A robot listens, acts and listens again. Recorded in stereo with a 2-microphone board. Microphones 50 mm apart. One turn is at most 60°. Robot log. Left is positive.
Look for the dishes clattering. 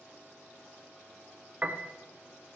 cmd idle
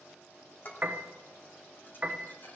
note: The dishes clattering: about 45° left or 135° left.
cmd yaw +45
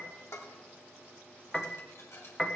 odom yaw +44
note: So it is at 90° left.
cmd yaw +60
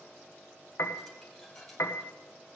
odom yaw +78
note: Nothing new. It was at 10° left.
cmd yaw +10
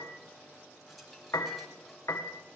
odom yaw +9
end: Facing the dishes clattering, 2 to 4 m away.